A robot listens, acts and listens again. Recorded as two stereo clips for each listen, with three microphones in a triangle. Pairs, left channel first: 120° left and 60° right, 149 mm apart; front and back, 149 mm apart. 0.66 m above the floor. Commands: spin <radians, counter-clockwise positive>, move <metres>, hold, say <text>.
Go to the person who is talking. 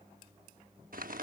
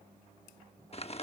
hold
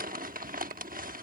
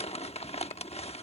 hold
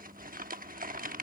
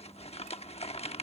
say I can't make out anyone speaking to turn to.